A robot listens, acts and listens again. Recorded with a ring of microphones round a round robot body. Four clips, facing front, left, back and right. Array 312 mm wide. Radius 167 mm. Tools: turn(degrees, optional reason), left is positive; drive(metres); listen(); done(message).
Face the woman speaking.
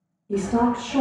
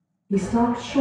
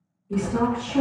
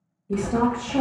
turn(degrees=-40, reason="The woman speaking: 40° right.")
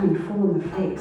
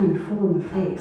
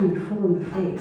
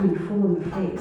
done("Facing the woman speaking.")